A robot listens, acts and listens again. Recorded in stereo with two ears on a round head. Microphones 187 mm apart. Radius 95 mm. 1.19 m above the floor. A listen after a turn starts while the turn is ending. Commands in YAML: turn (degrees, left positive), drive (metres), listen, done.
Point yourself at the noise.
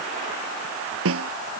turn: -70
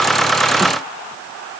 listen: true
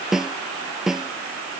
done: "Found it: a snare drum, straight ahead."